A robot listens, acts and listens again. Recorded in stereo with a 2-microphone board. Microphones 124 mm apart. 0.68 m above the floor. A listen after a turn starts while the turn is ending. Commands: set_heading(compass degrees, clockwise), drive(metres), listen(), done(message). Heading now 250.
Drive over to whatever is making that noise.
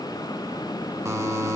set_heading(275)
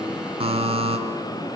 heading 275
set_heading(45)
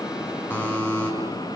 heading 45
set_heading(30)
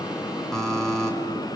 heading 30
drive(1.0)
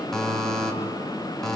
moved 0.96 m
drive(1.0)
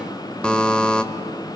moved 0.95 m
set_heading(20)
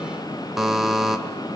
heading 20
drive(1.0)
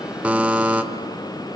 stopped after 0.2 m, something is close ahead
set_heading(30)
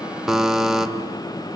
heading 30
done("I am next to the buzzer.")